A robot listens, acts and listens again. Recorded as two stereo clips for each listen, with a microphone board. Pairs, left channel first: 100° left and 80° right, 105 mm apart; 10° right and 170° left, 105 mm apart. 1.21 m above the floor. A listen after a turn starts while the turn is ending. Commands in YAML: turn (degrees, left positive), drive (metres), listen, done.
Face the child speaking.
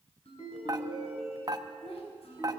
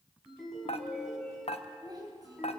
turn: 120
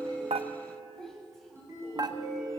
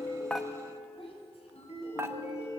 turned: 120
turn: 15
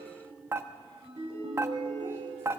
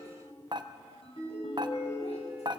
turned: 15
listen: true
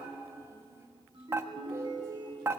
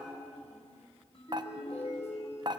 turn: -15
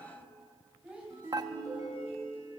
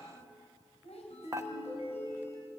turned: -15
done: "Facing the child speaking, over 4 m away."